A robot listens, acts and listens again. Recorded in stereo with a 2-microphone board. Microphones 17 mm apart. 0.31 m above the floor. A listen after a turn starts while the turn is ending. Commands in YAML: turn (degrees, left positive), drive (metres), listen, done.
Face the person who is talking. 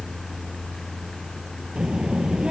turn: -50
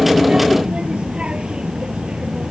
turn: -80
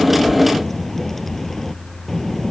done: "Facing the child speaking."